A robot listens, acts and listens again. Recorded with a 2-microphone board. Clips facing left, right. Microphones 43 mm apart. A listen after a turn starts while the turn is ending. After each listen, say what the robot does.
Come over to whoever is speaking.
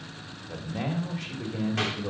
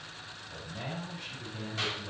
Turn 90° left.
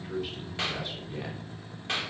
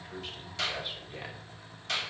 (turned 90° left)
Turn 10° right.
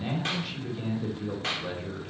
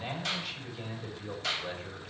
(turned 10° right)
Drive 1.0 m forward.
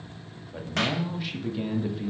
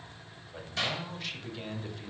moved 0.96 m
Drive 1.0 m forward.
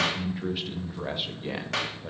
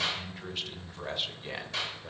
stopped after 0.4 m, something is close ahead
Arrived at the man speaking, straight ahead.